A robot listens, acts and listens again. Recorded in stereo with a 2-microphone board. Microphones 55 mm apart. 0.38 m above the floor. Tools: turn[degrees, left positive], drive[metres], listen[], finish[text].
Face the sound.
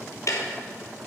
Thought: The ticking: about 75° left or 105° left.
Action: turn[75]
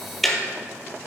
Action: finish[Facing the ticking.]